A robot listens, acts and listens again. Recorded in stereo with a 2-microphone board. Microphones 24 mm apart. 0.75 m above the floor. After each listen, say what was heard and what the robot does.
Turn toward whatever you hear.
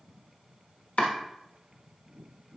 Turn 90° left.
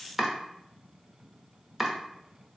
So it is at 10° right. Turn 10° right.
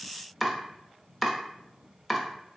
Facing the chopping, under 1 m away.